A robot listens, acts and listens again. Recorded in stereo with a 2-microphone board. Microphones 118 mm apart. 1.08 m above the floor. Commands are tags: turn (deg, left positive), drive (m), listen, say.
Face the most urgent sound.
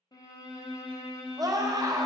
<turn deg="-30"/>
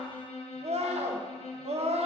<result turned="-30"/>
<turn deg="-115"/>
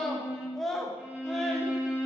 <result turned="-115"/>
<say>Found it: a scream, straight ahead, under 1 m away.</say>